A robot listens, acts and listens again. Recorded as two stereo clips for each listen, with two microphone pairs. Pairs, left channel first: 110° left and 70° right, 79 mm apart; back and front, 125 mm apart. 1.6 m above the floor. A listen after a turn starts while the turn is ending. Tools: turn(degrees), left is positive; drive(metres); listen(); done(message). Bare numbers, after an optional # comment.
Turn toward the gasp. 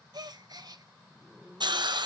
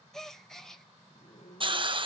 # The gasp: 90° right.
turn(-90)
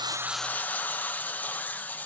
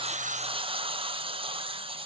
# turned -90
done("Facing where the gasp came from. I can't hear it now.")